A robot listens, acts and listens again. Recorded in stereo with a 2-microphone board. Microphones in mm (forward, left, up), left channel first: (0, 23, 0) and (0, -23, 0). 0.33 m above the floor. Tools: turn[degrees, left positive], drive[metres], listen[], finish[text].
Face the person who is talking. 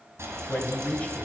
Thought: The man speaking: about 30° left or 150° left.
Action: turn[30]
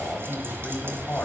Thought: So it is at 110° left.
Action: turn[110]
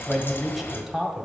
Action: finish[Found it: a man speaking, straight ahead, 1 to 2 m away.]